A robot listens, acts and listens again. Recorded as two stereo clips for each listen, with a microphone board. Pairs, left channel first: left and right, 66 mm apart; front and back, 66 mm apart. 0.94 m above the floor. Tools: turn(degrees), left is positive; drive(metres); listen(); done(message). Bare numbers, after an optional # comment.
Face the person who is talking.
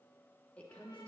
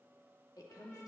# The woman speaking: 20° left.
turn(20)
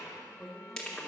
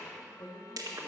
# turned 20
done("Facing the woman speaking.")